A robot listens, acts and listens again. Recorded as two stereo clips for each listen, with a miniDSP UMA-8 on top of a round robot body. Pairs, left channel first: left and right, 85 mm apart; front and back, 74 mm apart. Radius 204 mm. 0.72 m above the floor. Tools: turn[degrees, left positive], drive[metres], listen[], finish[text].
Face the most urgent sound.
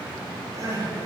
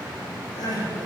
Thought: The crying: 35° right.
Action: turn[-35]
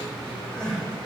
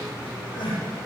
Thought: The crying is now 10° left.
Action: turn[10]
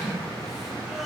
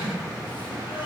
Action: listen[]
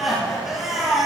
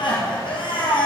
Action: finish[Found it: crying, straight ahead, 2 to 4 m away.]